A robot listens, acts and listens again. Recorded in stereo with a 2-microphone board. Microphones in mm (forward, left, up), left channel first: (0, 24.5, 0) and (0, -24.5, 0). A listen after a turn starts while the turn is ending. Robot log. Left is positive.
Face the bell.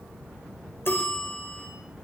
note: The bell: about 50° left or 130° left.
cmd yaw +50
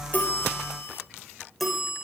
end: Found it: a bell, straight ahead.